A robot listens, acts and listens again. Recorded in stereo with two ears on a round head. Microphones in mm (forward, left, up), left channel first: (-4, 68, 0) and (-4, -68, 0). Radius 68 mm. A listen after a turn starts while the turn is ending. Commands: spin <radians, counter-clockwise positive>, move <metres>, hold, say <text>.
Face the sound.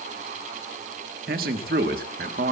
spin -1.13
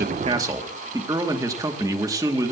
spin -0.44
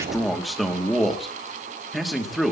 say Found it: a man speaking, straight ahead, 2 to 4 m away.